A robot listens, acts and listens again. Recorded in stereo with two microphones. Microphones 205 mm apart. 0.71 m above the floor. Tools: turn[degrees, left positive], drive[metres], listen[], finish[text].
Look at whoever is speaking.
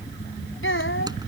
Action: turn[90]
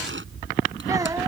Thought: So it is at 15° right.
Action: turn[-15]
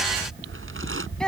Action: finish[Found it: a child speaking, straight ahead.]